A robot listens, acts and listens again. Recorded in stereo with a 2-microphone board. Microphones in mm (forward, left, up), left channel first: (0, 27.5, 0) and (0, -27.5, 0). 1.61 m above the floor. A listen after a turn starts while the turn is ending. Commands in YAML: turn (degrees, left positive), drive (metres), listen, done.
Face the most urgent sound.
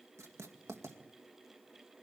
listen: true
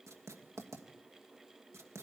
listen: true
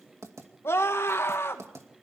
turn: 55
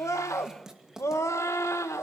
turn: 70
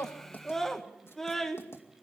done: "Found it: a scream, straight ahead."